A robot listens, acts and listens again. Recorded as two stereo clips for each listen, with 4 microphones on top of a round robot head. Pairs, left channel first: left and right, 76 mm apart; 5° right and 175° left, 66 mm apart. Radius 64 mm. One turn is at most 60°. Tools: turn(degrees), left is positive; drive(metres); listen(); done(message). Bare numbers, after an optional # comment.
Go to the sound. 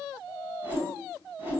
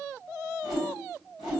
# The whoosh: 150° right.
turn(-60)
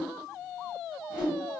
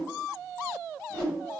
# The whoosh is now 95° right.
turn(-60)
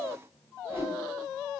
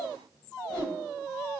# The whoosh is now 20° right.
turn(-20)
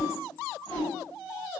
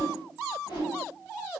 drive(1.0)
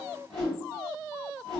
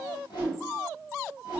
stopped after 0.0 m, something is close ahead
done("Something is in my way. I am facing the whoosh but have not reached it.")